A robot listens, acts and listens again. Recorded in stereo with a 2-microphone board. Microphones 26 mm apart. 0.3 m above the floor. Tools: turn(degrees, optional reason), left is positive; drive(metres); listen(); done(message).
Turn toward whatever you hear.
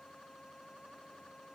listen()
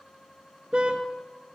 turn(degrees=-40, reason="The car horn: about 40° right or 140° right.")
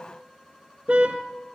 turn(degrees=-100, reason="So it is at 100° right.")
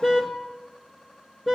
turn(degrees=-15, reason="The car horn is now 15° right.")
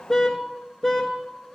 done("Facing the car horn, 2 to 4 m away.")